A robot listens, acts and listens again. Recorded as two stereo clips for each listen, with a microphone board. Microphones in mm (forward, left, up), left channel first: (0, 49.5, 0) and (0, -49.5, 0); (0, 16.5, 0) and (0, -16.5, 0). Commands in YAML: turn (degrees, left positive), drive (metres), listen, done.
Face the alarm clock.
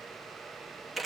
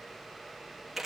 listen: true
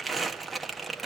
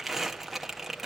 listen: true
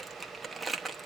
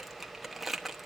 done: "I can't make out an alarm clock, only crumpling."